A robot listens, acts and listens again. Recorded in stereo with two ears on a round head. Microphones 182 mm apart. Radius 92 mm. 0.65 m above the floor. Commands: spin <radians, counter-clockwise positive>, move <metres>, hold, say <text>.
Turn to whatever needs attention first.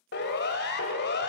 spin 1.05
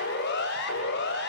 spin 1.05
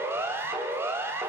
spin -0.17
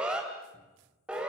say Found it: a siren, straight ahead.